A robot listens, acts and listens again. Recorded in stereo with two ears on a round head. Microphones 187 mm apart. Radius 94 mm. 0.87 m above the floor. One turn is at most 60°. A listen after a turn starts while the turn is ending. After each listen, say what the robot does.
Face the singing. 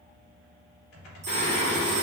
Turn 55° left.
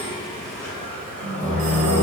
Found it: singing, straight ahead.